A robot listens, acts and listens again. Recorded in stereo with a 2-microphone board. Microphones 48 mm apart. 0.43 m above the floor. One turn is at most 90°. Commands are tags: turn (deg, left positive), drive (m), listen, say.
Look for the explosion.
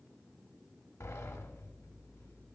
<listen/>
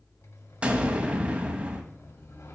<turn deg="-25"/>
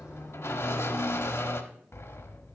<listen/>
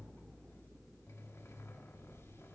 <say>I heard an explosion, but can't make it out now. It was about straight ahead or 130° right.</say>